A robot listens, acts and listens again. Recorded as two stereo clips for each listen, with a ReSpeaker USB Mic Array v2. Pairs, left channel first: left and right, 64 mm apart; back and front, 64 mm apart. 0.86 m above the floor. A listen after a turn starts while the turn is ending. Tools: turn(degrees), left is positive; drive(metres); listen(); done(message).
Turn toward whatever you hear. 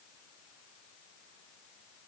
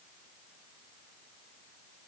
listen()
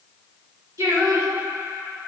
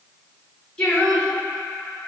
turn(degrees=-130)
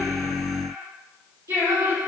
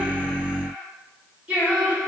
turn(degrees=-70)
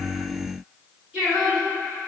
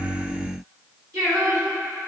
turn(degrees=-15)
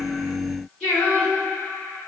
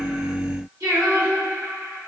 done("Facing the singing, 2 to 4 m away.")